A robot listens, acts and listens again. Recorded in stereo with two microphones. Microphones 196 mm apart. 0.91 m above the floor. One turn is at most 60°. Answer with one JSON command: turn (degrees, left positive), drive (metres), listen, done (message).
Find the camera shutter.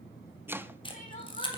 {"turn": 25}
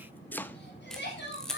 {"done": "Facing the camera shutter, 2 to 4 m away."}